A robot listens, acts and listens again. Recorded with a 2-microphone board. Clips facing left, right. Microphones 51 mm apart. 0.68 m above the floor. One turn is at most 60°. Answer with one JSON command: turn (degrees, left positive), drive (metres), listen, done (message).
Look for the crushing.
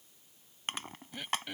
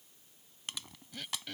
{"turn": 45}
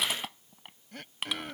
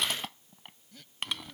{"done": "Found it: crushing, straight ahead."}